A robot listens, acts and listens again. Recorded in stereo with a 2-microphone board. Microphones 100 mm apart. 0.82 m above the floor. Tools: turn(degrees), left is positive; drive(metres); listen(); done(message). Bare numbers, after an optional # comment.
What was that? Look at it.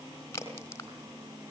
# The crack: about 30° left or 150° left.
turn(30)
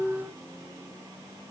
listen()
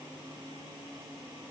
done("I heard a crack, but can't make it out now. It was about straight ahead or 120° left.")